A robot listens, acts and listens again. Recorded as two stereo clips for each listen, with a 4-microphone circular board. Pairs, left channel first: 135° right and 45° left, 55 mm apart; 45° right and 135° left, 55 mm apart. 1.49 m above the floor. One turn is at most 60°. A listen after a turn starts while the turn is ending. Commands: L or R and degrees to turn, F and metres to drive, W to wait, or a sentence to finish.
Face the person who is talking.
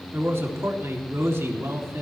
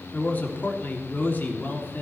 L10
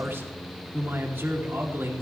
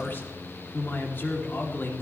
Found it: a man speaking, straight ahead.